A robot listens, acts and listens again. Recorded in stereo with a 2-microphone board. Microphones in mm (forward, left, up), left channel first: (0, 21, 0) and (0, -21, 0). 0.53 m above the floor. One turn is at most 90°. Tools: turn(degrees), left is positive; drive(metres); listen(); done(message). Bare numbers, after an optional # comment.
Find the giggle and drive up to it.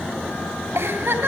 # The giggle: about 60° right or 120° right.
turn(-60)
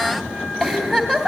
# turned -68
drive(1.0)
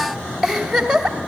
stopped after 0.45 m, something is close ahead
done("Something is in my way. I am facing the giggle but have not reached it.")